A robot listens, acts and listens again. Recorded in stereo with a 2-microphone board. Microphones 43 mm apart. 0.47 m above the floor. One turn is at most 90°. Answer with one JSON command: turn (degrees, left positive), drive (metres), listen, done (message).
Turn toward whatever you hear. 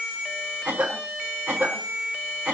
{"turn": -30}
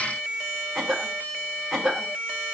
{"done": "Facing the cough."}